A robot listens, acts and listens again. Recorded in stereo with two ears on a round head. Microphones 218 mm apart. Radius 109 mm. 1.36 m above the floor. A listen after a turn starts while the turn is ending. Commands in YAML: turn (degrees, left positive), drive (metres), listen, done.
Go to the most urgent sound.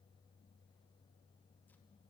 listen: true
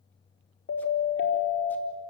turn: 50
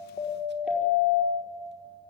drive: 1.0
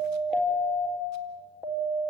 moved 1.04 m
drive: 1.0
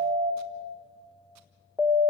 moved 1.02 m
drive: 1.0
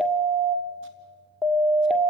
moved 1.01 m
drive: 1.0
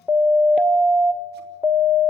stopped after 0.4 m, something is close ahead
done: "Arrived at the siren, straight ahead."